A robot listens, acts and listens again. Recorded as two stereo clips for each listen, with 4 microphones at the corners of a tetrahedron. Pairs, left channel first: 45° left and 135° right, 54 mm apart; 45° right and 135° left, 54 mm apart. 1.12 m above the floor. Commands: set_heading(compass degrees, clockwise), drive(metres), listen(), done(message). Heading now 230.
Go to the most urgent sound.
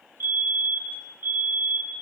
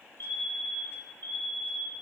set_heading(320)
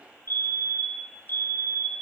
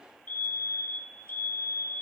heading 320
drive(1.0)
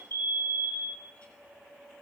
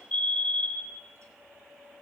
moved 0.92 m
set_heading(305)
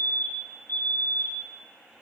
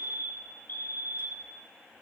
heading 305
drive(1.0)
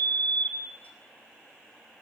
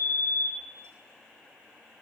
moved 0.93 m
drive(1.0)
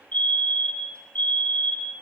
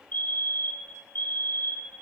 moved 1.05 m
drive(1.0)
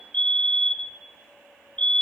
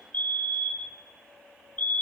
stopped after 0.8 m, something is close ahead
set_heading(315)
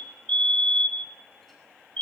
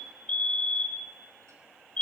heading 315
done("I am next to the fire alarm.")